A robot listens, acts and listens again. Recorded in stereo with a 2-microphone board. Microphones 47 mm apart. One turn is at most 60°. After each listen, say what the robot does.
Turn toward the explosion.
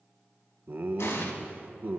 Turn 60° left.
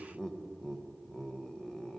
Keep listening.
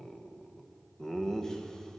I heard an explosion, but can't make it out now. It was about 10° left or 50° left.